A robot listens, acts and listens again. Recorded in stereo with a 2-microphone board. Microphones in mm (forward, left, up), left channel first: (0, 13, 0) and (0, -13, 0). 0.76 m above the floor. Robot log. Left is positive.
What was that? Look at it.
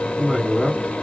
note: The woman speaking: about 65° left or 115° left.
cmd yaw +65
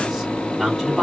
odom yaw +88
end: Found it: a woman speaking, straight ahead, 2 to 4 m away.